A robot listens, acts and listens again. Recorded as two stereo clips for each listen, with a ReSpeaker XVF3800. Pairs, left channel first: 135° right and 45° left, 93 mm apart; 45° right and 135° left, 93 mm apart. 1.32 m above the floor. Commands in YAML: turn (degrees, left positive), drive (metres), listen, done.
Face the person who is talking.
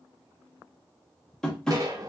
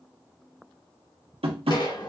listen: true
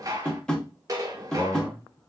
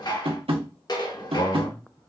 turn: -55
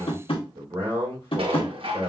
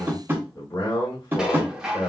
done: "Found it: a man speaking, straight ahead."